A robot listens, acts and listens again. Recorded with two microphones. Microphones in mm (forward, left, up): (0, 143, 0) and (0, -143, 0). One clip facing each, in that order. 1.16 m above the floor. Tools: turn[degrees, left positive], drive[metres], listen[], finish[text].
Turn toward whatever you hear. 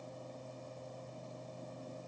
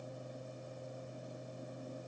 Action: listen[]
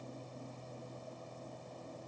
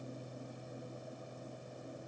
Action: listen[]
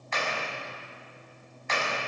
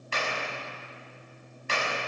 Thought: The clap: about 35° right or 145° right.
Action: turn[-35]
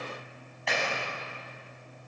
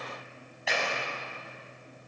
Action: finish[Found it: a clap, straight ahead, over 4 m away.]